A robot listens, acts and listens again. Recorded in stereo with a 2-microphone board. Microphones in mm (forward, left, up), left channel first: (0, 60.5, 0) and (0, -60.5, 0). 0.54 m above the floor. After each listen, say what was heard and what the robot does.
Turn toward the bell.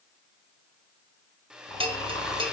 The bell: about 45° right or 135° right. Turn 45° right.
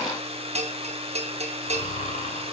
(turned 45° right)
So it is at 80° right. Turn 80° right.
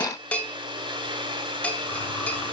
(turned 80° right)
The bell is now 10° left. Turn 10° left.
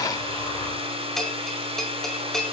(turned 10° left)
Facing the bell, under 1 m away.